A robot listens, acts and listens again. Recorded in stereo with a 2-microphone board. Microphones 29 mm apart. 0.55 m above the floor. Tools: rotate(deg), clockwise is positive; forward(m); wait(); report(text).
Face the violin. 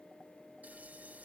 wait()
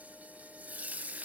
wait()
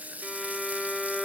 rotate(-20)
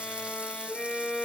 rotate(-140)
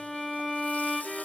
report("Facing the violin.")